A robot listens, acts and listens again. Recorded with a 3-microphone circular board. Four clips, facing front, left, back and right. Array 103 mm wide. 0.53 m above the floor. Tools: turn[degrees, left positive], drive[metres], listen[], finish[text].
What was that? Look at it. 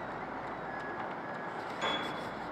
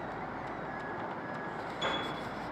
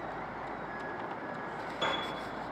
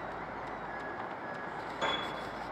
Thought: The piano: 130° right.
Action: turn[-130]
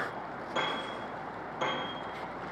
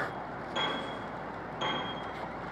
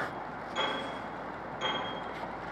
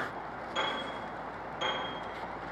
Action: finish[Facing the piano.]